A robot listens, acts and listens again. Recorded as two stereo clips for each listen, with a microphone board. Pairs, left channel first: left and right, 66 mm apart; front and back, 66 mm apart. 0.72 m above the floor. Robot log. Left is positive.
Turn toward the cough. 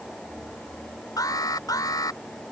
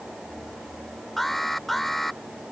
cmd idle
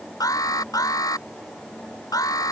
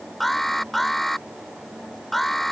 cmd idle
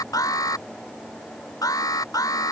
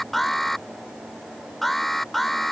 end: I can't make out a cough, only an alarm.